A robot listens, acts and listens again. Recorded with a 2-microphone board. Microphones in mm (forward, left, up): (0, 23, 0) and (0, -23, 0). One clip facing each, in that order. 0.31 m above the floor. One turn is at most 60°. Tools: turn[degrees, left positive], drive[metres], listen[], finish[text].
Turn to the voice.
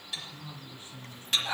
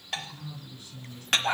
Thought: The man speaking: about 25° left or 155° left.
Action: turn[25]
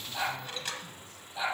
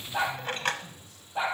Action: listen[]
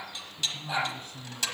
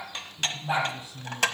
Thought: So it is at 125° left.
Action: turn[60]
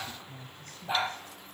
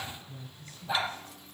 Thought: The man speaking is now 65° left.
Action: turn[60]
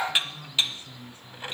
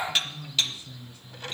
Thought: The man speaking is now 40° left.
Action: turn[40]
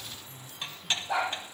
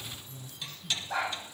Thought: The man speaking is now 15° left.
Action: turn[15]
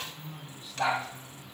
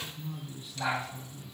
Action: finish[Found it: a man speaking, straight ahead.]